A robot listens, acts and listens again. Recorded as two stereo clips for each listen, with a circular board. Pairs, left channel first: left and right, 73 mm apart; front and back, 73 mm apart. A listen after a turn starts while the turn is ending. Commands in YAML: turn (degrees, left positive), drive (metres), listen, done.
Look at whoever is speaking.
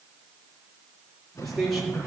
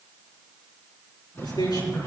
done: "Found it: a man speaking, straight ahead."